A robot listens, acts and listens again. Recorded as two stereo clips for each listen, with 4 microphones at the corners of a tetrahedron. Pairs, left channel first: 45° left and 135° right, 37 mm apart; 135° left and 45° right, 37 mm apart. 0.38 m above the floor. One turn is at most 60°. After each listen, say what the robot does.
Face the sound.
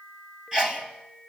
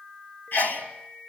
Turn 60° left.
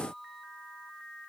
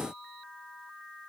Turn 60° left.
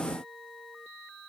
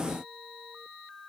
Turn 40° left.
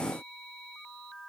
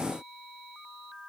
I heard a sneeze from this way, but can't make it out now.